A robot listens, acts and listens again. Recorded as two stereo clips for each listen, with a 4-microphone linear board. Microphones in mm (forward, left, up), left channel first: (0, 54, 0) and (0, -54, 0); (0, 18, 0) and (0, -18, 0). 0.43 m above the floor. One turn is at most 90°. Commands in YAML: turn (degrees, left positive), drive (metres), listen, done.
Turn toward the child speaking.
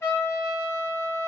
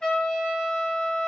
listen: true
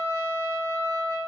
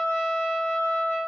listen: true
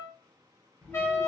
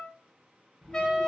turn: 30
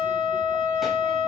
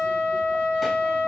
listen: true
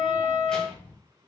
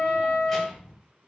turn: 30
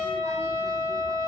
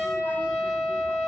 listen: true
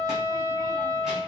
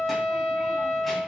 listen: true
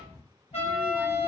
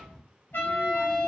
done: "Facing the child speaking, 1 to 2 m away."